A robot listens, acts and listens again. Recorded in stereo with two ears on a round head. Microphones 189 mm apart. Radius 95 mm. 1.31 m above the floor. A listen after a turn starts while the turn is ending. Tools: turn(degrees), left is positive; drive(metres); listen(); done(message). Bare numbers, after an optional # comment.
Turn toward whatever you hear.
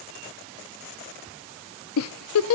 turn(90)
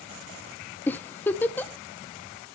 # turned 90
# So it is at 10° left.
turn(10)
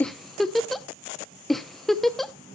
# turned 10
done("Facing the giggle.")